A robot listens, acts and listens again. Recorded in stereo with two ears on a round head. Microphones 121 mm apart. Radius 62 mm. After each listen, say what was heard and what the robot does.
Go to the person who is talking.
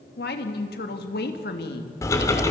Turn 90° left.
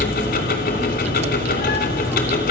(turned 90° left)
Keep listening.
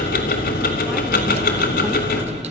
Keep listening.
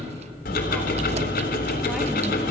Facing where the woman speaking came from. I can't hear it now. I did not reach it.